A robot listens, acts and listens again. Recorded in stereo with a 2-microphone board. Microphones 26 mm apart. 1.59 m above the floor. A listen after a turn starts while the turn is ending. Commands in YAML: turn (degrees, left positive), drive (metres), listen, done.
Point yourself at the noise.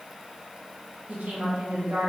turn: -70
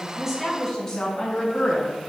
turn: 35
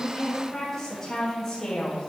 turn: 35
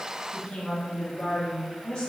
turn: 25
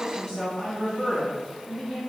turn: -10
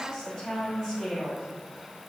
done: "Facing the woman speaking."